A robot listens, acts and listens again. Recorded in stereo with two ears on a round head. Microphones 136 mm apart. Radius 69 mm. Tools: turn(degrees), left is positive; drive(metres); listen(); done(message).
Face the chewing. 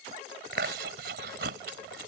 turn(degrees=-75)
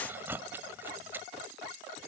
turn(degrees=-15)
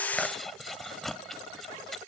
done("Found it: chewing, straight ahead.")